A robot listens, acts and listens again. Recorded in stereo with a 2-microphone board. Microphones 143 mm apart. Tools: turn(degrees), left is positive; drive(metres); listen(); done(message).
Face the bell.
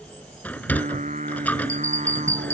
turn(degrees=-20)
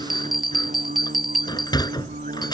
done("Facing the bell.")